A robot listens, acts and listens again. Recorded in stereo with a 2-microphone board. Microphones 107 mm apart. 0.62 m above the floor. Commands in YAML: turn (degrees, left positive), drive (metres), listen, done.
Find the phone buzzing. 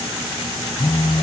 turn: 65
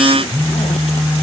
turn: 20
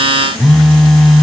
done: "Found it: a phone buzzing, straight ahead."